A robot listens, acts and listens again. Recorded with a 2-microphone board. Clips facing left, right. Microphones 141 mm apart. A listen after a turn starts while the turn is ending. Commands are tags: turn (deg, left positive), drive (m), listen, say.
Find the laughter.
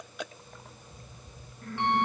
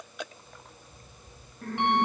<turn deg="-65"/>
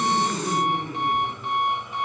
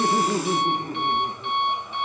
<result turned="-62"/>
<turn deg="-40"/>
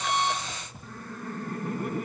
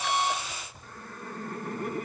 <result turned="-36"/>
<say>Facing the laughter, over 4 m away.</say>